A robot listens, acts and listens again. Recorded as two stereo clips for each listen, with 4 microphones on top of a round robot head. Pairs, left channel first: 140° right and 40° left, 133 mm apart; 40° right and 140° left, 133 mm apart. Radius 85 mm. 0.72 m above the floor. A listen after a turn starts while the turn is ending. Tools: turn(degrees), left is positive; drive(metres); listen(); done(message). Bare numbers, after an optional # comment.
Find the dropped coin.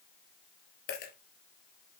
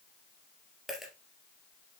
# The dropped coin: 130° right.
turn(-130)
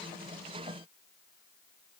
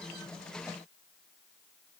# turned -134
done("I heard a dropped coin from this way, but can't make it out now.")